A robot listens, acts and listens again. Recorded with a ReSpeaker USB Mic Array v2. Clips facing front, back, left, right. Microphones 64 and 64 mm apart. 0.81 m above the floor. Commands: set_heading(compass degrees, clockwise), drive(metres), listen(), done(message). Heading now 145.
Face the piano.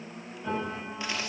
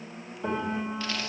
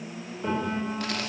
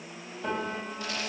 set_heading(340)
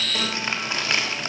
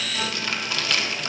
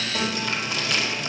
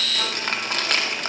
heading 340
listen()
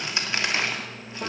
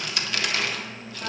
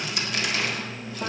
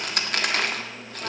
set_heading(310)
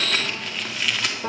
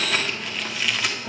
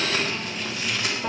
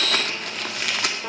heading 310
done("Found it: a piano, straight ahead.")